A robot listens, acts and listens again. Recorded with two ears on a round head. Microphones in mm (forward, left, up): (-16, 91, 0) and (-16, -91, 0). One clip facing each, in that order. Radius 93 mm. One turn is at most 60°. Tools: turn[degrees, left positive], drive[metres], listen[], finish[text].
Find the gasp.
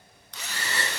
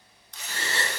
Thought: The gasp: about 25° right or 155° right.
Action: turn[-25]
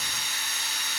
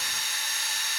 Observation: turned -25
Action: listen[]
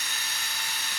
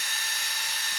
Action: finish[I heard a gasp, but can't make it out now. It was about straight ahead or 130° right.]